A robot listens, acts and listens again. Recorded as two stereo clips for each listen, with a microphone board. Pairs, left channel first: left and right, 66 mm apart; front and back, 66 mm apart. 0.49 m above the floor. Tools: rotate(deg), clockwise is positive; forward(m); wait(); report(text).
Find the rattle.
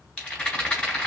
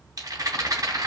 rotate(-155)
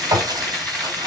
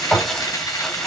report("Facing the rattle, 2 to 4 m away.")